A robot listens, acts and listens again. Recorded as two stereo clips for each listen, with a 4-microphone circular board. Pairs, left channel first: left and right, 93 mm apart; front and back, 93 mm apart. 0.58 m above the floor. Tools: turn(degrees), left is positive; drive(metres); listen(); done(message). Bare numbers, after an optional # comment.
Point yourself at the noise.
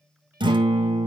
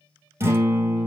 # The guitar: 115° right.
turn(-115)
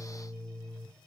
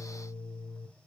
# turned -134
# The guitar is now 15° left.
turn(15)
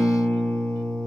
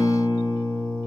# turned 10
done("Found it: a guitar, straight ahead, 2 to 4 m away.")